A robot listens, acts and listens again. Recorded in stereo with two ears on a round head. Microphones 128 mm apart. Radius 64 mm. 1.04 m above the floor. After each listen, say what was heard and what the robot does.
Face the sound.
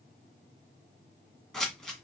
Turn 30° left.
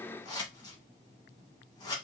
So it is at 145° left. Turn 145° left.
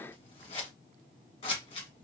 The scissors is now 45° left. Turn 45° left.
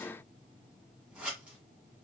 The scissors is now 10° right. Turn 10° right.
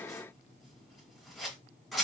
Found it: scissors, straight ahead.